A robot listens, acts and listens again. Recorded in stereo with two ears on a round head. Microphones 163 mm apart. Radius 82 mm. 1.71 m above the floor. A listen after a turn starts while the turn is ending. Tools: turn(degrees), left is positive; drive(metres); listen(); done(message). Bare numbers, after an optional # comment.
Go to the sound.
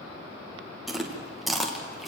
turn(30)
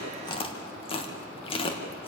# So it is at 150° left.
turn(150)
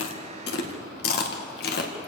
# The chewing is now 55° left.
turn(55)
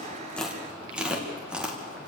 drive(1.0)
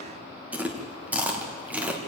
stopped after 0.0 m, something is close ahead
# The chewing is now 10° right.
turn(-10)
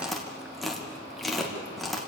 done("Blocked. The chewing is further on, straight ahead.")